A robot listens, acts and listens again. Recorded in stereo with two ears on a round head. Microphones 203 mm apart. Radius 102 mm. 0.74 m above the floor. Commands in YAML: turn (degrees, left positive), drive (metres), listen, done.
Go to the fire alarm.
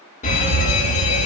turn: 35
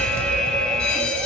drive: 1.0
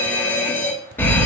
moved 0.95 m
turn: 10
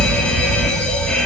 drive: 1.0
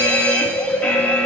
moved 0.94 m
turn: 10
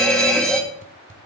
drive: 1.0
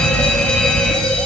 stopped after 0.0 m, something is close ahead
done: "I am next to the fire alarm."